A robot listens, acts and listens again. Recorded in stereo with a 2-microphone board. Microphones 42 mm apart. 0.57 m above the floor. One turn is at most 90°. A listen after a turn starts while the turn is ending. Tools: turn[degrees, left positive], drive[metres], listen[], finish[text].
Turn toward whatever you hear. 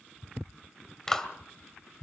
Action: turn[30]
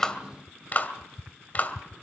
Thought: So it is at 140° left.
Action: turn[90]
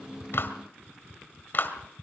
Thought: The clap is now 50° left.
Action: turn[50]
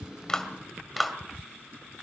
Action: finish[Facing the clap.]